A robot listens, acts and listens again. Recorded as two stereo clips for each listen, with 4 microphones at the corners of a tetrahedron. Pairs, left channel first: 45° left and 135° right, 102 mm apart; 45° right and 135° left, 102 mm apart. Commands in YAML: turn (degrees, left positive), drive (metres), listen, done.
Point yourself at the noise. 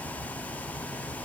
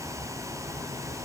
listen: true
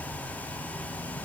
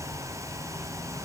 listen: true
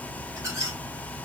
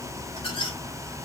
turn: -75
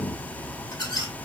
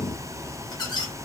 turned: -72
done: "Facing the squeak."